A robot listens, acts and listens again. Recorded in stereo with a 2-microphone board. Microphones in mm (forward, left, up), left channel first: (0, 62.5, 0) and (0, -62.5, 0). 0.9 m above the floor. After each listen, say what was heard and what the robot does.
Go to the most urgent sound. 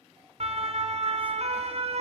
The siren: about 55° right or 125° right. Turn 55° right.
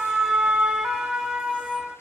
Drive 1.0 m forward.
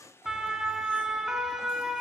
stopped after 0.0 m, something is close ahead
Something is in my way. I am facing the siren but have not reached it.